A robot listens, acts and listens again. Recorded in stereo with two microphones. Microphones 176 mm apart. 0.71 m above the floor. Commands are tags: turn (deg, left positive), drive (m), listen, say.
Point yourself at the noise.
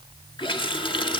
<turn deg="25"/>
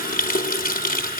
<turn deg="130"/>
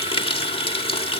<turn deg="30"/>
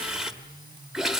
<say>Facing the running tap, 1 to 2 m away.</say>